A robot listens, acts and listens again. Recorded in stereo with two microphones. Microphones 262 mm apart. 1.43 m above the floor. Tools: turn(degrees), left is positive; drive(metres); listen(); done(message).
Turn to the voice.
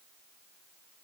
listen()
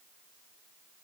listen()
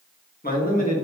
turn(degrees=30)
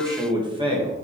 turn(degrees=-25)
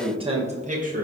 turn(degrees=-30)
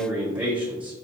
done("Found it: a man speaking, straight ahead, 1 to 2 m away.")